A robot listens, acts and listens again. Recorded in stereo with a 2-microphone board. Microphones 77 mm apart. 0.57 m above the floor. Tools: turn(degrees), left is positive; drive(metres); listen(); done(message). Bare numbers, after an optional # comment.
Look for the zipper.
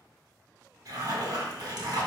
# The zipper: about 60° right or 120° right.
turn(-60)
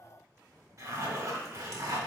# So it is at 50° right.
turn(-50)
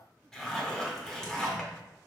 # The zipper is now 10° left.
turn(10)
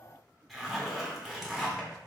done("Found it: a zipper, straight ahead, under 1 m away.")